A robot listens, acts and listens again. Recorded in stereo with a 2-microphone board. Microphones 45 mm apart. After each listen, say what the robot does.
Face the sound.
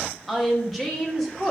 Turn 30° left.
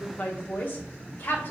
Turn 135° left.
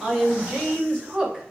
Turn 15° right.
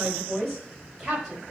Turn 10° right.
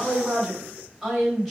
Found it: a woman speaking, straight ahead.